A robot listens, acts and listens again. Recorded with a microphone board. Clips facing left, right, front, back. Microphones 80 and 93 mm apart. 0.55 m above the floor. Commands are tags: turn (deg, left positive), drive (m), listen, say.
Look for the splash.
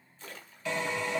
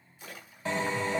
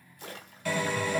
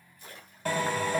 <turn deg="-10"/>
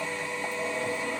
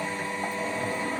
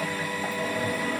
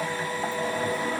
<say>Facing where the splash came from. I can't hear it now.</say>